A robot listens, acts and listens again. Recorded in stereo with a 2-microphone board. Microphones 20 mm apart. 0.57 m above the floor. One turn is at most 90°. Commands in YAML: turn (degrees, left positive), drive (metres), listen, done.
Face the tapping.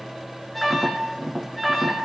turn: -50
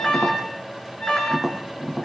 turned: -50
done: "Facing the tapping."